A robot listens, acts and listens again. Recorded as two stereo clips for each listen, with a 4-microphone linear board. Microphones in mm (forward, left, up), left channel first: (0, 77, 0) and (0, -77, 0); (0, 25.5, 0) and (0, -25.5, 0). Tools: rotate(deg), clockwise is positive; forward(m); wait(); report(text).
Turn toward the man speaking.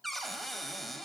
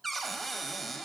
wait()
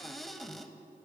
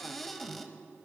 wait()
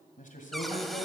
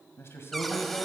rotate(-55)
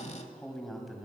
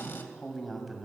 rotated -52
report("Facing the man speaking, 2 to 4 m away.")